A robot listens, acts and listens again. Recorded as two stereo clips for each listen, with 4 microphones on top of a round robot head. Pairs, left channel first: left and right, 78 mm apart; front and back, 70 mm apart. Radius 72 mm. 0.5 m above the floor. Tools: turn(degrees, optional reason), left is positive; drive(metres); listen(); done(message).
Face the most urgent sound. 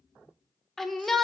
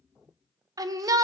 turn(degrees=175, reason="The shout: 175° left.")
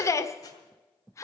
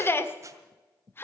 turn(degrees=50, reason="The shout is now 50° left.")
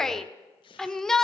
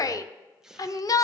done("Found it: a shout, straight ahead.")